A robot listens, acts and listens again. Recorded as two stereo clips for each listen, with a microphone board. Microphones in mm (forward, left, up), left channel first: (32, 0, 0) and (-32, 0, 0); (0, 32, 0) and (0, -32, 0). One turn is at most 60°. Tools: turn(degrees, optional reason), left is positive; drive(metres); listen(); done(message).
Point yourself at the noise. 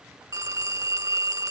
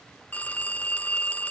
turn(degrees=60, reason="The phone ringing: 155° left.")
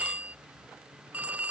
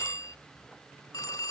turn(degrees=60, reason="The phone ringing is now 115° left.")
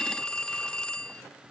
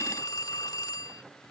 turn(degrees=60, reason="The phone ringing is now 75° left.")
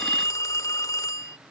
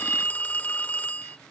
turn(degrees=25, reason="The phone ringing is now 25° left.")
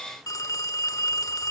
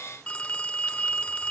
turn(degrees=20, reason="The phone ringing is now 20° left.")
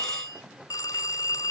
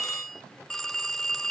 done("Facing the phone ringing.")